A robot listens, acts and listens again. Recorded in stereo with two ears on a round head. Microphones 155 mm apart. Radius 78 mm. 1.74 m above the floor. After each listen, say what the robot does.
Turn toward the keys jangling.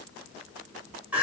Keep listening.
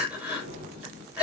Turn 35° right.
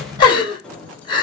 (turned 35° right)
Found it: keys jangling, straight ahead, 2 to 4 m away.